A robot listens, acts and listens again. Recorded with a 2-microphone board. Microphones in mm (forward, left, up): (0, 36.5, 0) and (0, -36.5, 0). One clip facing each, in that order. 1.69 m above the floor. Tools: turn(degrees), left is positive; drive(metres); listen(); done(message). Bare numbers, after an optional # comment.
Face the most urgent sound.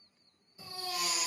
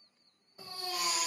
# The baby crying: about 55° right or 125° right.
turn(-55)
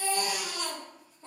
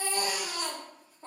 # So it is at 55° right.
turn(-55)
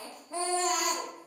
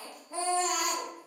done("Facing the baby crying, under 1 m away.")